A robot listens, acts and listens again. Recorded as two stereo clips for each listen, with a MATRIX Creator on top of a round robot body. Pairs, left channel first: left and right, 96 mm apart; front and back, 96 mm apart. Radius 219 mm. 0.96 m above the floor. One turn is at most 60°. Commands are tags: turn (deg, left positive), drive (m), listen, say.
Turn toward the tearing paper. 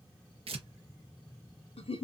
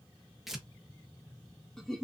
<turn deg="-60"/>
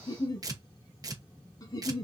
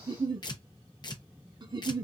<turn deg="-40"/>
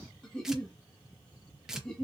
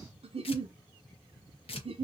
<say>Facing the tearing paper.</say>